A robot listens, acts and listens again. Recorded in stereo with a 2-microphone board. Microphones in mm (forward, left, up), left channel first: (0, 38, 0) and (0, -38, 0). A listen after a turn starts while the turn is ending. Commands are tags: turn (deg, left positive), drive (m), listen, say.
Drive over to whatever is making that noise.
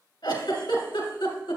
<turn deg="90"/>
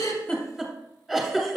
<drive m="1.0"/>
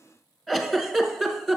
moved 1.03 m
<drive m="1.0"/>
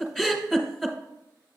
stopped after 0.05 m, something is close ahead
<say>I am next to the giggle.</say>